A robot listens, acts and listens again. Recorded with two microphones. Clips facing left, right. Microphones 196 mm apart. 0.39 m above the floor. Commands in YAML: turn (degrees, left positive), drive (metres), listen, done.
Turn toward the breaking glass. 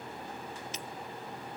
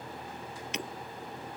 turn: -70
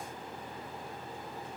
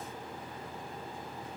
listen: true
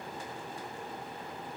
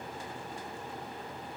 done: "I heard breaking glass, but can't make it out now. It was about straight ahead or 40° right."